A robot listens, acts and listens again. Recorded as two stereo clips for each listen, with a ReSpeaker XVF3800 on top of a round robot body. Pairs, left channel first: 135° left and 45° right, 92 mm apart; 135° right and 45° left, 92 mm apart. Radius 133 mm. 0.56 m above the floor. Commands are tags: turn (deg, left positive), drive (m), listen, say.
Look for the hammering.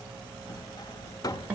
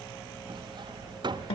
<turn deg="85"/>
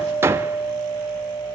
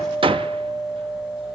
<turn deg="20"/>
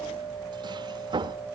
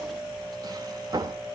<say>Found it: hammering, straight ahead.</say>